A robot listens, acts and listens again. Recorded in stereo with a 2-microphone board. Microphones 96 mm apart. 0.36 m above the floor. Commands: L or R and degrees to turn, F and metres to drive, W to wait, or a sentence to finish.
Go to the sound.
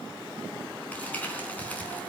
L15
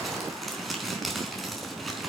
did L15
F1.0
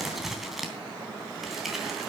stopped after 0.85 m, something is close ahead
Something is in my way. I am facing the crumpling but have not reached it.